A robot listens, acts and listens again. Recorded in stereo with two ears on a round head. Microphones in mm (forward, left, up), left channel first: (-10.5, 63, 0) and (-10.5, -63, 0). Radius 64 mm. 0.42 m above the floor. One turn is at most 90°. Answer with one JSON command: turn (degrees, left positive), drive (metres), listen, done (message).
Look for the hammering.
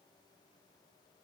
{"listen": true}
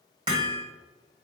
{"turn": -35}
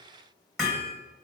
{"done": "Facing the hammering."}